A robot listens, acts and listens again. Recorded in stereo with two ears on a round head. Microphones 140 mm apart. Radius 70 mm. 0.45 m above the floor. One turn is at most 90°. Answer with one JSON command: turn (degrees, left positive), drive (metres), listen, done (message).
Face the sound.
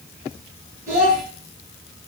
{"turn": -20}
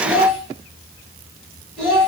{"done": "Found it: a child speaking, straight ahead."}